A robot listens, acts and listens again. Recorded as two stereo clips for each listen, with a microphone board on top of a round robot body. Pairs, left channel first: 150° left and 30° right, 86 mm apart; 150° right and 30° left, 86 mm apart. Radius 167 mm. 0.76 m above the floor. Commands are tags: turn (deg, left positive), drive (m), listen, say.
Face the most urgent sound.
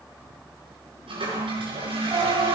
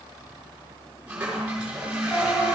<turn deg="-75"/>
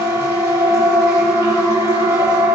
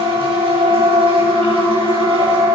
<say>Found it: a siren, straight ahead.</say>